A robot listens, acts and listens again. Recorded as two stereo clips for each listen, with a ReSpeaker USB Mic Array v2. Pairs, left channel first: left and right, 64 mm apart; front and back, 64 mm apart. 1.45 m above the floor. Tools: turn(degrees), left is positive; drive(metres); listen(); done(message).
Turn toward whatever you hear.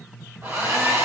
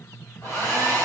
turn(degrees=-50)
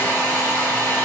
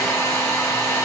turn(degrees=25)
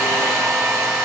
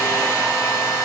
done("Facing the hair dryer, 1 to 2 m away.")